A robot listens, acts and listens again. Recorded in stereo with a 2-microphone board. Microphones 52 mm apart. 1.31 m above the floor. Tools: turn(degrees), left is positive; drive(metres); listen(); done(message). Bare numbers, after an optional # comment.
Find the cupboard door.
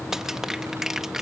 listen()
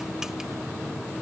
listen()
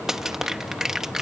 done("I can't make out a cupboard door to turn to.")